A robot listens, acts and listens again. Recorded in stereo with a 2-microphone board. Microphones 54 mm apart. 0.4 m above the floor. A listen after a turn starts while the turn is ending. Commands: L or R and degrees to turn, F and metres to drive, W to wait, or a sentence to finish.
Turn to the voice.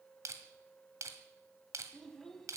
L30
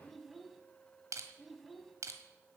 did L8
L30
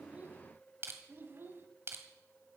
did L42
R45
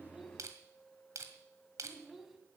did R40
Found it: a child speaking, straight ahead, 2 to 4 m away.